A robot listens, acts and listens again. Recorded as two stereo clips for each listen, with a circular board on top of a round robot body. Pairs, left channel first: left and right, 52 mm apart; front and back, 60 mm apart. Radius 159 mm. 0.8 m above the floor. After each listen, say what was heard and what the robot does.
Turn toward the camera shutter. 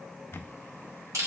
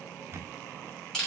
The camera shutter: 135° left. Turn 135° left.
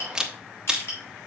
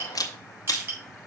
The camera shutter is now 10° right. Turn 10° right.
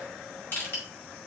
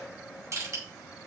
Keep listening.
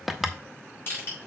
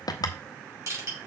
Found it: a camera shutter, straight ahead.